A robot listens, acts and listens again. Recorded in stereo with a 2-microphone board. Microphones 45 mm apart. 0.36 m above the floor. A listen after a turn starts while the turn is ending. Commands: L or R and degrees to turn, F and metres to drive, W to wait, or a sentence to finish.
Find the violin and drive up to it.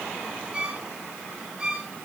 R25
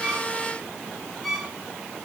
F1.0
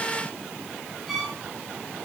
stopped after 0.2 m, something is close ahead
Something is in my way. I am facing the violin but have not reached it.